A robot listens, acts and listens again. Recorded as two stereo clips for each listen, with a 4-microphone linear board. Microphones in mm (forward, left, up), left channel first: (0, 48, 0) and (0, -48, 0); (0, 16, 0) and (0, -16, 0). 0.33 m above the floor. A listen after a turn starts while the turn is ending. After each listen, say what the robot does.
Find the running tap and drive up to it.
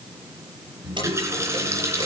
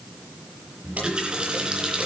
Turn 30° right.
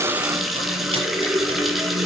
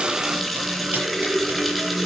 Drive 1.0 m forward.
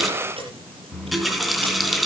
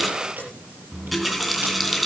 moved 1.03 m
Drive 1.0 m forward.
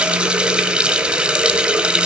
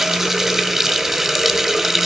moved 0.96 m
Turn 10° right.
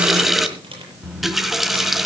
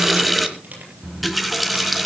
Drive 1.0 m forward.
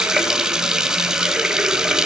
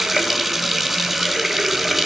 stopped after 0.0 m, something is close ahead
Turn 10° right.
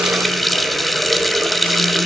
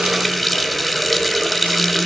I am next to the running tap.